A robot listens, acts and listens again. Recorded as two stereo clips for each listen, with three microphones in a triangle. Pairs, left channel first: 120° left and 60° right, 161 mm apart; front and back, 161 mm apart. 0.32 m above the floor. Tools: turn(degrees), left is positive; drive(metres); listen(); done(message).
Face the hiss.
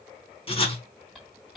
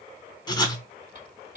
turn(degrees=-150)
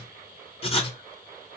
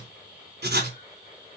listen()
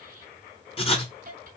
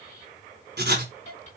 turn(degrees=-40)
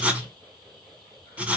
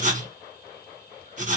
listen()
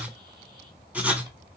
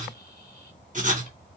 listen()
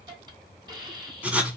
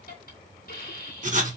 done("Found it: a hiss, straight ahead.")